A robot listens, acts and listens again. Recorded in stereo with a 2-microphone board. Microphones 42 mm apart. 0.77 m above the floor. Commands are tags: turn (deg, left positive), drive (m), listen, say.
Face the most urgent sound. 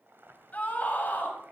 <turn deg="40"/>
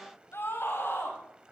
<turn deg="100"/>
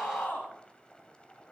<turn deg="50"/>
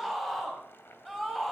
<say>Found it: a scream, straight ahead.</say>